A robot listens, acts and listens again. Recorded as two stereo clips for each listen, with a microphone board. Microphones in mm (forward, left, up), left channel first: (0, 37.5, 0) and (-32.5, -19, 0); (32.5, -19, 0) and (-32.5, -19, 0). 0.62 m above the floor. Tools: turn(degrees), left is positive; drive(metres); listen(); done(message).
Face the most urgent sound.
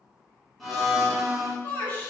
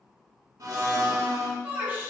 turn(degrees=115)
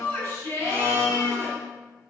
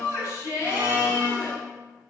turn(degrees=20)
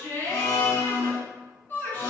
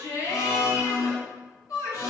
turn(degrees=10)
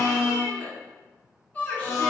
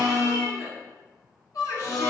done("Facing the shout, 1 to 2 m away.")